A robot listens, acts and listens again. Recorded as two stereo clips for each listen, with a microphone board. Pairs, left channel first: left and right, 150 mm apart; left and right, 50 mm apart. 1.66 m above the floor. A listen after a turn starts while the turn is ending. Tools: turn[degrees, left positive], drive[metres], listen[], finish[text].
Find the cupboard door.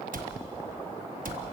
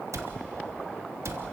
Thought: The cupboard door: about 75° right or 105° right.
Action: turn[-75]
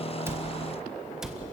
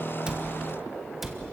Action: finish[Facing the cupboard door.]